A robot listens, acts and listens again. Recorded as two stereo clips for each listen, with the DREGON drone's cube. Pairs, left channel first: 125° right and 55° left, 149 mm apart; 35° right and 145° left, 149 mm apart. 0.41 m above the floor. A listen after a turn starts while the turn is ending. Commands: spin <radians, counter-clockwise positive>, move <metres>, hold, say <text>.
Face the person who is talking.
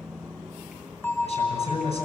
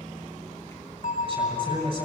spin -2.88
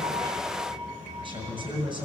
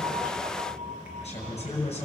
say Facing the man speaking.